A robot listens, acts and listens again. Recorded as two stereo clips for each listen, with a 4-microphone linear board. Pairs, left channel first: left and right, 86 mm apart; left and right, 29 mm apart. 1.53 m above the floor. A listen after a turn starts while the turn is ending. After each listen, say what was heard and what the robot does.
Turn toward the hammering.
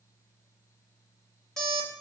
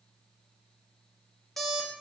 Keep listening.
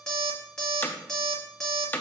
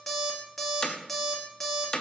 The hammering: about 20° left or 160° left. Turn 20° left.
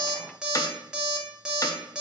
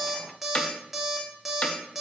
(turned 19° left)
So it is at 145° left. Turn 145° left.
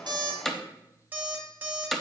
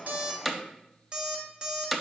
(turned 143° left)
Found it: hammering, straight ahead.